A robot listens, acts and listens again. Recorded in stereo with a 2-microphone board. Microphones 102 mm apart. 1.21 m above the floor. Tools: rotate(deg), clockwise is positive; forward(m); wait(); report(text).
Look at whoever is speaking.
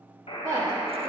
rotate(35)
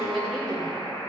report("Facing the woman speaking.")